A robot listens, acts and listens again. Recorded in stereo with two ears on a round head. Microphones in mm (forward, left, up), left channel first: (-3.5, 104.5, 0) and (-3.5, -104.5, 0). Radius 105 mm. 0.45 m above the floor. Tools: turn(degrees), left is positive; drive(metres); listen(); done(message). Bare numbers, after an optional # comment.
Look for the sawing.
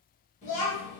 listen()
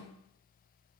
listen()
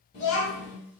done("I can't make out sawing to turn to.")